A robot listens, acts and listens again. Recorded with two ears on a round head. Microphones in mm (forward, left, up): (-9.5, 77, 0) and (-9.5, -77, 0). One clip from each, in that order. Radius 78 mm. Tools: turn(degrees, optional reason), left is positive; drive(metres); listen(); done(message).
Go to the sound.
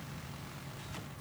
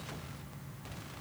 listen()
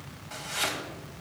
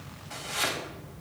turn(degrees=-30)
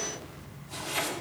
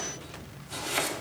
turn(degrees=-140, reason="So it is at 140° right.")
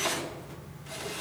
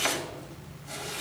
turn(degrees=-65, reason="The chopping is now 65° right.")
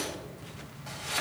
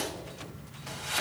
drive(metres=1.0)
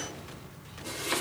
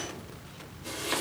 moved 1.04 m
turn(degrees=10, reason="The chopping is now 10° left.")
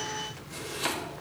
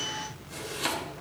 drive(metres=1.0)
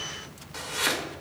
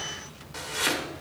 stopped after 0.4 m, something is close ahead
done("Arrived at the chopping, straight ahead.")